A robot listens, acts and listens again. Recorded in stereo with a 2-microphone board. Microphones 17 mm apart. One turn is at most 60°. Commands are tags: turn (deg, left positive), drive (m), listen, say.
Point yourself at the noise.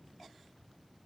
<listen/>
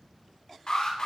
<turn deg="50"/>
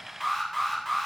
<say>Facing the alarm.</say>